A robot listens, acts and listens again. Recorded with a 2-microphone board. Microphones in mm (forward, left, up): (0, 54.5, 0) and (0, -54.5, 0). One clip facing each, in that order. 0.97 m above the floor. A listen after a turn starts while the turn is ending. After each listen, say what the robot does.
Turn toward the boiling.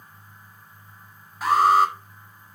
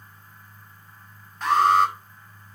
Keep listening.
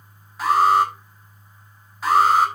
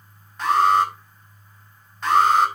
Keep listening.
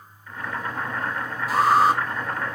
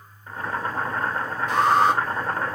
Turn 35° right.
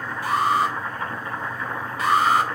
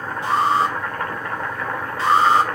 Turn 110° right.
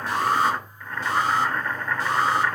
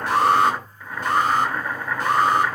Turn 10° right.
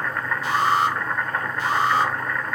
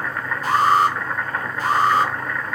Facing the boiling.